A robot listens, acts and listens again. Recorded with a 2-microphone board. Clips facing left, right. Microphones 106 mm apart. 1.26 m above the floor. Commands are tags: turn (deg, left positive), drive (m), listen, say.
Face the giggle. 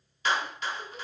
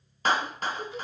<turn deg="-50"/>
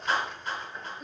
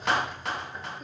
<listen/>
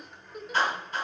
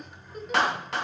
<say>Found it: a giggle, straight ahead, 2 to 4 m away.</say>